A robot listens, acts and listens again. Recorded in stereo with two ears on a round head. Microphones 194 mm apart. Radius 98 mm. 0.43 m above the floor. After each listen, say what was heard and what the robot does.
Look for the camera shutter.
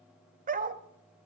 Keep listening.
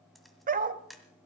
Turn 30° left.
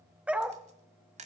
So it is at 35° right. Turn 35° right.
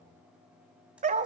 Keep listening.
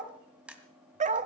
Facing the camera shutter.